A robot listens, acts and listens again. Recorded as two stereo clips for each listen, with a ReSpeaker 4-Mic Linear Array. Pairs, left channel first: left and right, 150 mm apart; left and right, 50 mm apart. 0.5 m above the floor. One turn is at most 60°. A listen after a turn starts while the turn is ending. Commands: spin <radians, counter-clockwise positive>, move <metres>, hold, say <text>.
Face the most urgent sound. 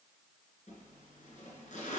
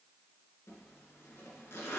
hold
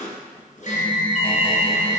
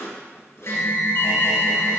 spin 0.96
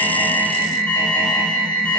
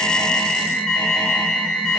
spin 0.17
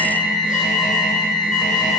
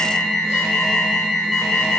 say Found it: an alarm, straight ahead.